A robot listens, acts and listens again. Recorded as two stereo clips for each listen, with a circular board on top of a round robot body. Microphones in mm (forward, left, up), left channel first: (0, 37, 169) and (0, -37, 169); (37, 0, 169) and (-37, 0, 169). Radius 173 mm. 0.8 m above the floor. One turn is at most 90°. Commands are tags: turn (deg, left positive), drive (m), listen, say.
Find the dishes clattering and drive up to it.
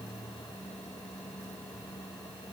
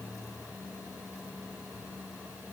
<listen/>
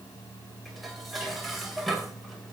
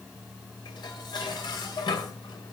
<drive m="1.0"/>
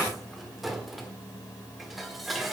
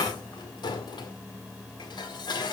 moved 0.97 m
<drive m="1.0"/>
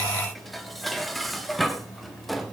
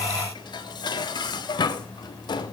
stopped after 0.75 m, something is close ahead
<say>Arrived at the dishes clattering, straight ahead.</say>